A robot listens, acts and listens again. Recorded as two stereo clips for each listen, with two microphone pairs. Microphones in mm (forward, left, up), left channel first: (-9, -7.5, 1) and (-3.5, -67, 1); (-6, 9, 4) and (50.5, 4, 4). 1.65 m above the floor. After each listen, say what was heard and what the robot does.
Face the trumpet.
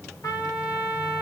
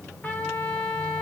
The trumpet: 110° left. Turn 110° left.
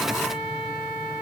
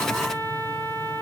Found it: a trumpet, straight ahead.